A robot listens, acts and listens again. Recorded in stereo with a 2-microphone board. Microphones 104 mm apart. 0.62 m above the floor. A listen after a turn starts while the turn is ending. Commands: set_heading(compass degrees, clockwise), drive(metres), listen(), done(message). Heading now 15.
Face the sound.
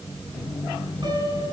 set_heading(60)
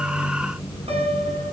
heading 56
set_heading(151)
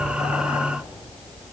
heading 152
listen()
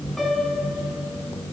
done("Facing the piano, over 4 m away.")